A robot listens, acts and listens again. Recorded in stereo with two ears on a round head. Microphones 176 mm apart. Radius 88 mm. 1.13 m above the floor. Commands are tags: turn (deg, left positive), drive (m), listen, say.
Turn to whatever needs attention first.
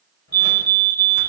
<turn deg="20"/>
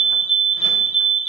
<turn deg="140"/>
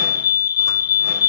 <turn deg="60"/>
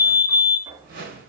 <turn deg="15"/>
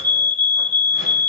<say>Found it: a fire alarm, straight ahead.</say>